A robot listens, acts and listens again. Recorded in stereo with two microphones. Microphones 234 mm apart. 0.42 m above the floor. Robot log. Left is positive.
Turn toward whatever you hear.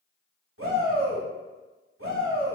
note: The shout: about 60° right or 120° right.
cmd yaw -60
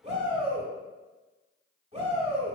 note: So it is at 30° right.
cmd yaw -30
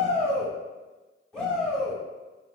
end: Found it: a shout, straight ahead, 1 to 2 m away.